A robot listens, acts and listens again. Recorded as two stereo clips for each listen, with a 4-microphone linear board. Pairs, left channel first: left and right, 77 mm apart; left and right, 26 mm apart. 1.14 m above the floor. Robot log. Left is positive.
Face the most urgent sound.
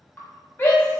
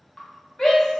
note: The shout: about 25° left or 155° left.
cmd yaw +25
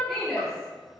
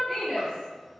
end: Found it: a shout, straight ahead, under 1 m away.